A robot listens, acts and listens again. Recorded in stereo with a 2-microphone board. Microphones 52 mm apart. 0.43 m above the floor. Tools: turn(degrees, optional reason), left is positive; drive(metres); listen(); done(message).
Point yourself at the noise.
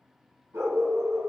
turn(degrees=-90)
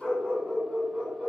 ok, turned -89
turn(degrees=-30, reason="So it is at 30° right.")
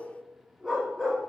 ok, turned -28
turn(degrees=-15, reason="The dog barking is now 15° right.")
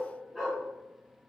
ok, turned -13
done("Facing the dog barking, 2 to 4 m away.")